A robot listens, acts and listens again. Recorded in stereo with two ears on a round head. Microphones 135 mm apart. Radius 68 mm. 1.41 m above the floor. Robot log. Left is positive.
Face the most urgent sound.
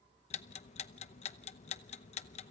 cmd idle
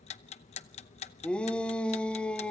cmd yaw +30
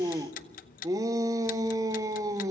note: So it is at 25° right.
cmd yaw -25
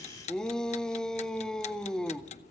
end: Found it: a shout, straight ahead, 1 to 2 m away.